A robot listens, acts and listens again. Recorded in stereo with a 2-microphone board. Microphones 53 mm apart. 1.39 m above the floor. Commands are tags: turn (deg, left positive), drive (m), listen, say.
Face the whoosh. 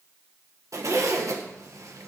<listen/>
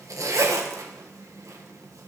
<listen/>
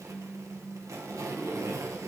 <say>I can't make out a whoosh to turn to.</say>